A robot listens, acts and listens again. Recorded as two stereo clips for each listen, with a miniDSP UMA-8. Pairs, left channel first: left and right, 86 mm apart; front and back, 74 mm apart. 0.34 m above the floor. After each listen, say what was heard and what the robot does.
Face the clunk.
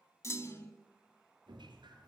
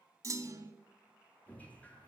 The clunk: 145° left. Turn 145° left.
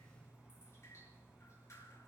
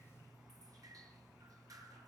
I heard a clunk from this way, but can't make it out now.